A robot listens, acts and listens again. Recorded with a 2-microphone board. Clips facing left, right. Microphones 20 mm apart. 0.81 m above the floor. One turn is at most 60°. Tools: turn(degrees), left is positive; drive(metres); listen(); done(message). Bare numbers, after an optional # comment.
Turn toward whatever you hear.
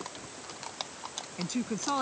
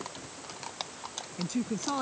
# The woman speaking: about 15° left or 165° left.
turn(15)
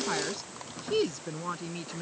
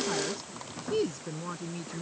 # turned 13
# The woman speaking: about 30° left or 150° left.
turn(30)
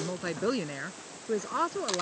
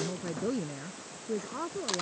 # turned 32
# So it is at 120° left.
turn(60)
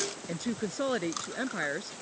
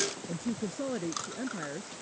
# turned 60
# The woman speaking is now 60° left.
turn(60)
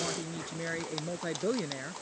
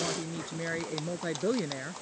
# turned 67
done("Facing the woman speaking.")